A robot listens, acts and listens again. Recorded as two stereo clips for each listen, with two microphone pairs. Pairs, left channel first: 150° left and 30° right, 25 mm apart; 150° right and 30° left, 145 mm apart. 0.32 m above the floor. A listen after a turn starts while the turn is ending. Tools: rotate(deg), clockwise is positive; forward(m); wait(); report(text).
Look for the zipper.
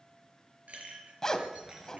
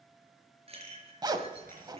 rotate(-85)
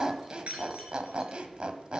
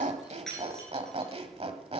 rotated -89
report("Facing the zipper.")